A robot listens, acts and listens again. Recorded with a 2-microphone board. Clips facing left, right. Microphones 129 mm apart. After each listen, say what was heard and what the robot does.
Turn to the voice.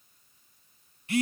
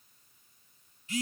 Keep listening.
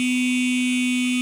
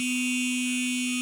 Keep listening.
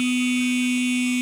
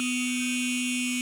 I can't make out anyone speaking to turn to.